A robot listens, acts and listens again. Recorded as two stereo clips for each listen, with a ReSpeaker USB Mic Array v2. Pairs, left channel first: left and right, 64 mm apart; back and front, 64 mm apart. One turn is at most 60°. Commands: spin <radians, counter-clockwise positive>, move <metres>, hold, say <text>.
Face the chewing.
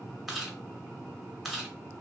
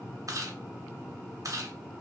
say Found it: chewing, straight ahead.